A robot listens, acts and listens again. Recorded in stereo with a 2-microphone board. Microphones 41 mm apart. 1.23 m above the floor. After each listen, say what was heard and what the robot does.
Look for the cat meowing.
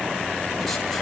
Keep listening.
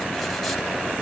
Keep listening.
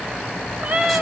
The cat meowing: about 40° right or 140° right. Turn 40° right.
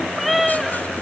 Found it: a cat meowing, straight ahead, 1 to 2 m away.